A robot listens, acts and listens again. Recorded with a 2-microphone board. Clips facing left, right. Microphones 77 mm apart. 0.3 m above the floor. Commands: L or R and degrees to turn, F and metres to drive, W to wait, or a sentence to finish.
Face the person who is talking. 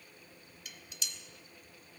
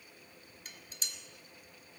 W
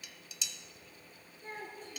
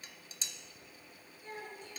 L40
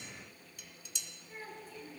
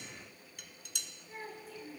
Found it: a child speaking, straight ahead.